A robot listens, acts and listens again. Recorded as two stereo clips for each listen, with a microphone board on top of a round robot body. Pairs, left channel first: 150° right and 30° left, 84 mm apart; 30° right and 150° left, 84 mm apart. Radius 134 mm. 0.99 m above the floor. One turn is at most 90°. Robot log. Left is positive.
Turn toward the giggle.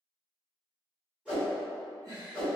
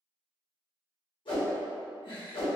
note: The giggle: 10° right.
cmd yaw -10
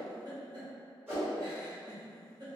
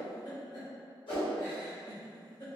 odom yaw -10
end: Found it: a giggle, straight ahead, 1 to 2 m away.